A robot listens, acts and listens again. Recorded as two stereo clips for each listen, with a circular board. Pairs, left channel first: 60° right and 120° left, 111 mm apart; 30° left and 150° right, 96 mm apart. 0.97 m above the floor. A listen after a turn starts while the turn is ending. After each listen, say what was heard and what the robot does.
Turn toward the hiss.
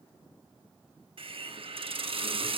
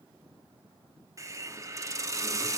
The hiss: 155° left. Turn 155° left.
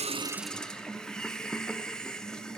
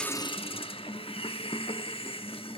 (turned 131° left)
The hiss is now 25° left. Turn 25° left.
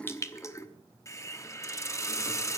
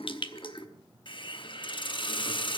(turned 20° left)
Facing the hiss.